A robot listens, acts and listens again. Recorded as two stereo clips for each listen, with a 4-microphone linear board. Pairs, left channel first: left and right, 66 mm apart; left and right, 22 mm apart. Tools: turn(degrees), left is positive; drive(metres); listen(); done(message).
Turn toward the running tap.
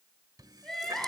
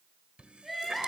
turn(degrees=-65)
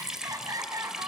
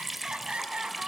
turn(degrees=-10)
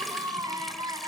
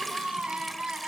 listen()
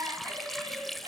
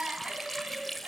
done("Facing the running tap.")